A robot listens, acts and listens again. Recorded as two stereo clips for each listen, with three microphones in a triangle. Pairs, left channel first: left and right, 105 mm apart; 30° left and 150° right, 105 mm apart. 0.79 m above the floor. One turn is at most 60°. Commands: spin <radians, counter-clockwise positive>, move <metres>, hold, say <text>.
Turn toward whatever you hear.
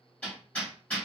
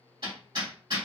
spin 1.05
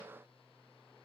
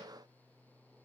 spin 1.05
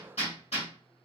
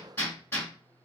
spin 1.05
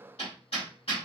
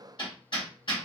spin 1.05
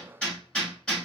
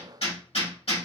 spin 0.17
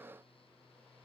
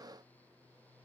hold
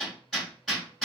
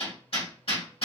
say Facing the hammering.